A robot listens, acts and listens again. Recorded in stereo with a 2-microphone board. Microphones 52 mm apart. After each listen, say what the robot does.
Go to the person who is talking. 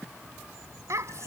Turn 70° right.
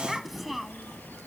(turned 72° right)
Drive 1.0 m forward.
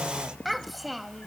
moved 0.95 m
Drive 1.0 m forward.
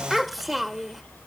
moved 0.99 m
Drive 1.0 m forward.
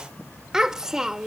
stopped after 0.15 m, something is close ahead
Turn 15° right.
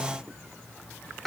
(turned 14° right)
Arrived at the child speaking, straight ahead.